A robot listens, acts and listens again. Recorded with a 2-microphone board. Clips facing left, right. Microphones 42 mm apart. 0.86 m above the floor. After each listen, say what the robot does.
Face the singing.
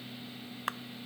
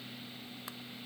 Keep listening.
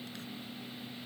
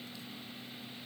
Keep listening.
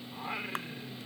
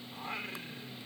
Turn 30° left.
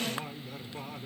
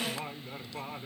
Turn 20° right.
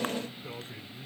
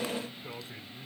Found it: singing, straight ahead.